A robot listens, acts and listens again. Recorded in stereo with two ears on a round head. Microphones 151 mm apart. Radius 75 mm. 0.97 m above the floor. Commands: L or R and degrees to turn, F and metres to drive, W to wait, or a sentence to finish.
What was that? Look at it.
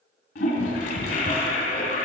L60
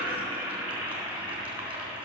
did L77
R10
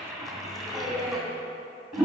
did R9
Found it: a toilet flushing, straight ahead.